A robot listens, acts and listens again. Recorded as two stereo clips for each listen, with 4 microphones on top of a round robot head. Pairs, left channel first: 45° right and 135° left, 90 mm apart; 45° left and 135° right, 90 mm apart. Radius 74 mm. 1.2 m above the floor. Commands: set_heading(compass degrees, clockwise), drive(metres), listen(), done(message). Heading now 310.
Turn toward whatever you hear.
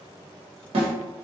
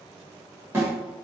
set_heading(150)
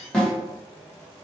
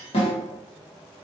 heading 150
set_heading(115)
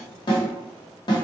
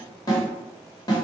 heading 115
done("Found it: a snare drum, straight ahead, 1 to 2 m away.")